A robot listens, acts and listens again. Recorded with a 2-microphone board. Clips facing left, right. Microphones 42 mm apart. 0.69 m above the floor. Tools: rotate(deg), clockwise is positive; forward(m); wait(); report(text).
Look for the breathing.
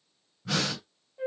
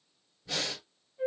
rotate(-90)
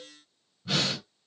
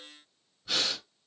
rotate(-10)
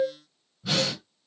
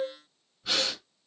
report("Found it: breathing, straight ahead, 1 to 2 m away.")